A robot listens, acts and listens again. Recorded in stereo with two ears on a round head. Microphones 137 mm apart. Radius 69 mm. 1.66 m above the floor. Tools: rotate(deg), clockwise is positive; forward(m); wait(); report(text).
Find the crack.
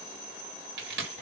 rotate(90)
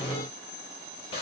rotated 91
report("I heard a crack from this way, but can't make it out now.")